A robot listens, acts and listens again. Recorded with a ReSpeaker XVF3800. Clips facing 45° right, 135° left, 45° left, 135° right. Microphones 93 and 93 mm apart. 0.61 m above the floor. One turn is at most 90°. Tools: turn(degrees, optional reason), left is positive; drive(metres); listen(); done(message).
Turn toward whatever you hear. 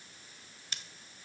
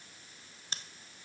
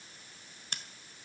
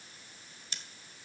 turn(degrees=80, reason="The scissors: 80° left.")
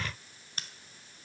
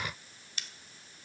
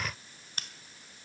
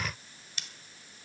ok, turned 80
done("Found it: scissors, straight ahead, 1 to 2 m away.")